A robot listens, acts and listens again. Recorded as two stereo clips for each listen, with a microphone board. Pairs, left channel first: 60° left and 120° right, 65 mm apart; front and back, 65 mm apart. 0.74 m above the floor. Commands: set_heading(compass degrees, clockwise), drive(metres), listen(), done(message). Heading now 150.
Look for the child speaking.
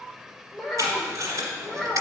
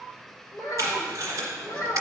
set_heading(195)
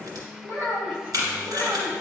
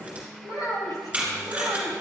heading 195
done("Found it: a child speaking, straight ahead, 2 to 4 m away.")